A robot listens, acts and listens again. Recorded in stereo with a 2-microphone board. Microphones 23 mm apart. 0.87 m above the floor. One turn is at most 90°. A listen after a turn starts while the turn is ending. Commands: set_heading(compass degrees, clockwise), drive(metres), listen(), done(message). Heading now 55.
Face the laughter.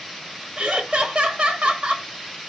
set_heading(115)
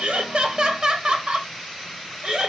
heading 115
set_heading(165)
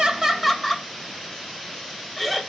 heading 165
done("Found it: laughter, straight ahead.")